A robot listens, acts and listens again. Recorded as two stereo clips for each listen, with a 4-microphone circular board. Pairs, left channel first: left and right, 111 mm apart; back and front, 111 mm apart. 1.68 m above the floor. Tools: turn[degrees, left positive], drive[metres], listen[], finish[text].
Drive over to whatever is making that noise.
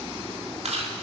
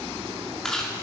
Thought: The chewing: 95° right.
Action: turn[-95]
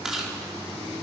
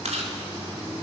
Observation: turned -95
Action: drive[1.0]
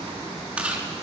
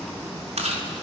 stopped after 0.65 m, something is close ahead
Thought: The chewing is now 10° right.
Action: turn[-10]
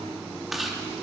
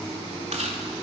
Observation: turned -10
Action: finish[Blocked. The chewing is further on, straight ahead.]